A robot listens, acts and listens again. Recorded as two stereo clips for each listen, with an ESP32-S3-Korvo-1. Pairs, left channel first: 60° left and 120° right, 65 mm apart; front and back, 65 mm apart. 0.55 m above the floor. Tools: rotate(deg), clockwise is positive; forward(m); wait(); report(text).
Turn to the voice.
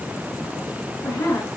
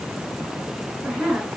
rotate(-85)
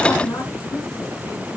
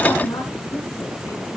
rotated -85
report("Facing the woman speaking, over 4 m away.")